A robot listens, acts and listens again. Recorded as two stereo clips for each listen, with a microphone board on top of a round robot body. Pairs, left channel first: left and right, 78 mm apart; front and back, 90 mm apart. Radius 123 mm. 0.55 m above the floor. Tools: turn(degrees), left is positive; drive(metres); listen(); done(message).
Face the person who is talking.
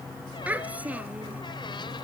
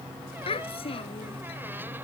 turn(degrees=-15)
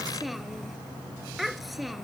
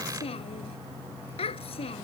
done("Found it: a child speaking, straight ahead.")